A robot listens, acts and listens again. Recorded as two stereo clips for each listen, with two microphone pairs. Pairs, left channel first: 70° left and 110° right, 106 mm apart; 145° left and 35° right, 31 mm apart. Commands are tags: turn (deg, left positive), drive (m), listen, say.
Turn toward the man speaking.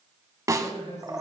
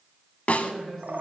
<turn deg="65"/>
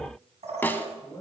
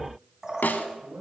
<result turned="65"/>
<turn deg="15"/>
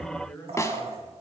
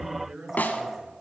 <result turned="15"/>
<say>Found it: a man speaking, straight ahead.</say>